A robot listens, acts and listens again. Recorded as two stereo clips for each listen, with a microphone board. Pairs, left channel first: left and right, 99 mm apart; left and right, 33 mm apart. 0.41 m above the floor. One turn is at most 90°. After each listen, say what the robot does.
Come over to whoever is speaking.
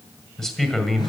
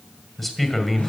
Turn 30° left.
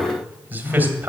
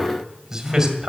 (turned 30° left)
Turn 20° right.
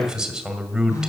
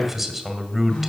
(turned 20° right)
Drive 1.0 m forward.
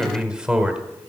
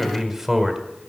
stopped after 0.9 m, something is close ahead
Turn 15° right.
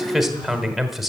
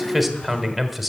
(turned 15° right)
I am next to the man speaking.